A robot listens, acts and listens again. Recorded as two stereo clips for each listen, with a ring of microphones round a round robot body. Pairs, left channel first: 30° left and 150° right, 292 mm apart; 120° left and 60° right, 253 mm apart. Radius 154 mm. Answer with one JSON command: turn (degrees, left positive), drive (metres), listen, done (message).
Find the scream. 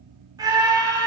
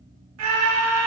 {"turn": -75}
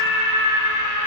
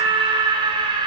{"turn": 10}
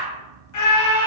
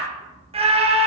{"done": "Facing the scream."}